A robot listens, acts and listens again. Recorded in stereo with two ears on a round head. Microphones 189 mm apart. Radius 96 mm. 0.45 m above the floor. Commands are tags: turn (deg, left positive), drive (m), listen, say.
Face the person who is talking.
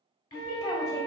<turn deg="20"/>
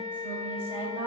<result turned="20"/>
<turn deg="-15"/>
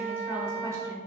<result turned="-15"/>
<turn deg="-20"/>
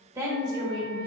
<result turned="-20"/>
<turn deg="-25"/>
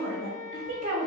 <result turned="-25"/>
<turn deg="-35"/>
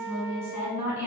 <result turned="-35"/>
<say>Found it: a woman speaking, straight ahead, 1 to 2 m away.</say>